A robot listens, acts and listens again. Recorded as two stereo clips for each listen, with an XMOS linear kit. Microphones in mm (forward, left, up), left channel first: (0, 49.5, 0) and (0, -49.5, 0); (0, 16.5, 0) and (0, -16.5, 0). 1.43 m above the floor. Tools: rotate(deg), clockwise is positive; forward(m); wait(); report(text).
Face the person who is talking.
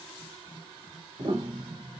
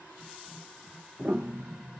wait()
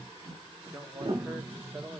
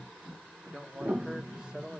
rotate(30)
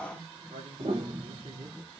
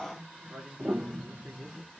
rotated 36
rotate(110)
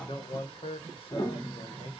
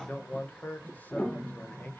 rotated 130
rotate(-60)
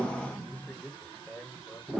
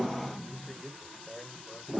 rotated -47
rotate(-15)
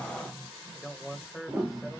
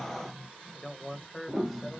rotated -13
report("Facing the man speaking, 1 to 2 m away.")